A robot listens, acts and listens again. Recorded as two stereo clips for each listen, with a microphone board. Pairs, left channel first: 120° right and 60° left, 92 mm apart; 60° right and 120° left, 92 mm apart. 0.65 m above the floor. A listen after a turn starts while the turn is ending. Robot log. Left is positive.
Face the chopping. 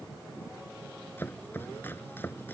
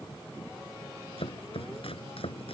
note: The chopping: 50° right.
cmd yaw -50
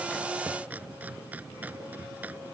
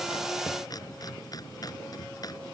note: The chopping is now 10° right.
cmd yaw -10
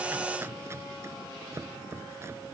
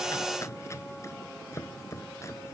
end: Facing the chopping.